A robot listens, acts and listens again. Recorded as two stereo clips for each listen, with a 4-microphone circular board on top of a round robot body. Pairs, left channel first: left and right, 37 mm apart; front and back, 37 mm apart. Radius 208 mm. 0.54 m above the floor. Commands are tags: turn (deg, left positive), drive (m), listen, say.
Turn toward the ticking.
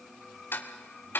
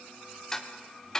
<turn deg="75"/>
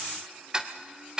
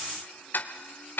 <turn deg="-20"/>
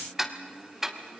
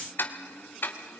<turn deg="-10"/>
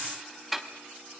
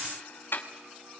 <say>Facing the ticking.</say>